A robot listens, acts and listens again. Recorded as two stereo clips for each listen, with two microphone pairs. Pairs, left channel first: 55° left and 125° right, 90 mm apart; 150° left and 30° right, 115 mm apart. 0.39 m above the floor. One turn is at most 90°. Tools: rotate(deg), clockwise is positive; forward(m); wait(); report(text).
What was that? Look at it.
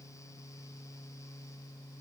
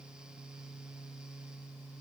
wait()
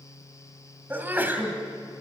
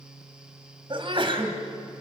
rotate(60)
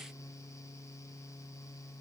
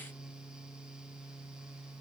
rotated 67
report("Facing where the sneeze came from. I can't hear it now.")